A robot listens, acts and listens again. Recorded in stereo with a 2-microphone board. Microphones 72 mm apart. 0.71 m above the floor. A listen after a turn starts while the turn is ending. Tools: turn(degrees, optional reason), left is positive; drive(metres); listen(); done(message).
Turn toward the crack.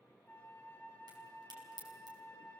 turn(degrees=-90)
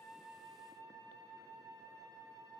done("I heard a crack from this way, but can't make it out now.")